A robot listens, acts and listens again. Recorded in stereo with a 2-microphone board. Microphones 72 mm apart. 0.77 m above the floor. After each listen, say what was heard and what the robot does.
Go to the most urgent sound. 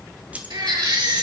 Turn 90° right.
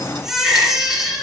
Drive 1.0 m forward.
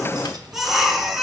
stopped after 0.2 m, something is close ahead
Blocked. The baby crying is further on, straight ahead.